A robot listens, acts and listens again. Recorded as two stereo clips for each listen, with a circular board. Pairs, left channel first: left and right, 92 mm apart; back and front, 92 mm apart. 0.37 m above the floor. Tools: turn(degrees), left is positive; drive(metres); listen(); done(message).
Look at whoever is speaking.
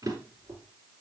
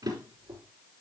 listen()
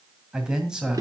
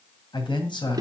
turn(degrees=-170)
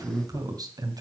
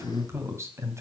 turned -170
turn(degrees=-55)
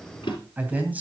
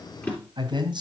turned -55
turn(degrees=-20)
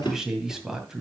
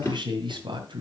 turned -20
done("Facing the man speaking.")